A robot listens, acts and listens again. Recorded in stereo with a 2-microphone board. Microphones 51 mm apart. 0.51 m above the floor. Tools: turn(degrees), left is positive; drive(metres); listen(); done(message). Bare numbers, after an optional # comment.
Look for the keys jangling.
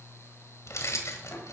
# The keys jangling: about 75° left or 105° left.
turn(75)
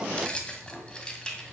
# So it is at 15° left.
turn(15)
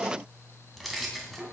done("Found it: keys jangling, straight ahead, 2 to 4 m away.")